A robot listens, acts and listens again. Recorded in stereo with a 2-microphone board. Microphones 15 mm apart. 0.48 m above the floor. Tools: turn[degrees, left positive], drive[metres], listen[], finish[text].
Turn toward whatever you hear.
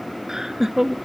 Thought: The laughter: about 35° right or 145° right.
Action: turn[-35]
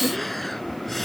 Action: finish[Facing the laughter.]